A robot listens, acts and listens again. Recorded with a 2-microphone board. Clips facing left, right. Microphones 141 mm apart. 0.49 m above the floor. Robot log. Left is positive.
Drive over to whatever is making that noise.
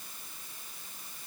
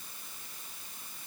cmd idle
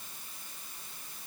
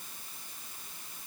cmd idle
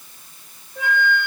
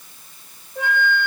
note: The flute: about 15° right or 165° right.
cmd yaw -15
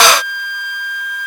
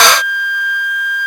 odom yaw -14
cmd fwd 1.0
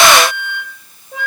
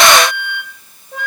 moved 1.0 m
cmd fwd 1.0
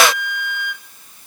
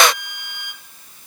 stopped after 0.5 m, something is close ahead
end: Arrived at the flute, straight ahead.